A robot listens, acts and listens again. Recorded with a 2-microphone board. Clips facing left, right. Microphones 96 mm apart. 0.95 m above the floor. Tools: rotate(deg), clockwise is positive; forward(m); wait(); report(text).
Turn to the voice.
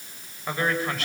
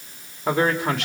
rotate(90)
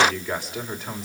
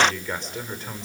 report("Facing the man speaking, 2 to 4 m away.")